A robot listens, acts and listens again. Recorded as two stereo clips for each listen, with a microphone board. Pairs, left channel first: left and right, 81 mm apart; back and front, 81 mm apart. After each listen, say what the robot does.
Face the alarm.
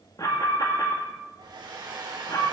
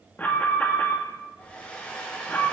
Turn 115° left.
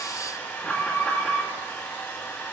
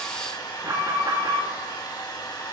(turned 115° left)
Turn 15° left.
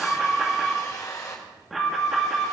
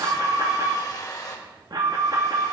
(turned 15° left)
Found it: an alarm, straight ahead, 2 to 4 m away.